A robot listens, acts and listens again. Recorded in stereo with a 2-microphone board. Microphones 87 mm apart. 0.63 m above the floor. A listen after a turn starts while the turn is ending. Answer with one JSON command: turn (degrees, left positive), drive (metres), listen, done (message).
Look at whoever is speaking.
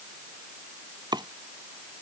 {"listen": true}
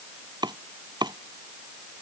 {"listen": true}
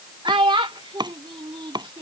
{"turn": -70}
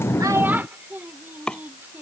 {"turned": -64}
{"listen": true}
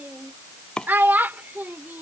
{"turn": -25}
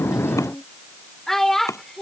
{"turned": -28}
{"done": "Facing the child speaking."}